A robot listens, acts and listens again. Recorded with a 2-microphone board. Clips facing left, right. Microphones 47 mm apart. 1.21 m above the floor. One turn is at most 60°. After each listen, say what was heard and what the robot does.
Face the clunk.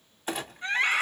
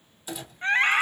The clunk: about 45° left or 135° left. Turn 45° left.
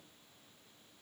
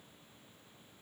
Keep listening.
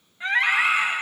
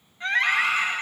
I heard a clunk, but can't make it out now. It was about straight ahead or 90° left.